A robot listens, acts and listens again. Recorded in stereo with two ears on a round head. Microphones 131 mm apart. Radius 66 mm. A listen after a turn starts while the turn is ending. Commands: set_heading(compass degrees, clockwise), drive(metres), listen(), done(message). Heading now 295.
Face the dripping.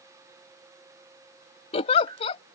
set_heading(355)
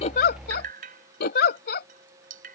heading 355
set_heading(55)
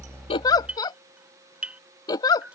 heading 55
set_heading(65)
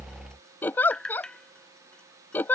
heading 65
done("Facing the dripping.")